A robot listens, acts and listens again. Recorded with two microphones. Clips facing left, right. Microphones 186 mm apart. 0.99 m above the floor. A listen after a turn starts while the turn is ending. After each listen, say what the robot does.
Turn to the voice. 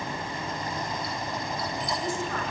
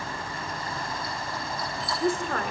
Turn 60° right.
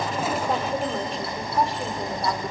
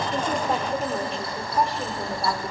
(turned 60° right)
Facing the woman speaking, 2 to 4 m away.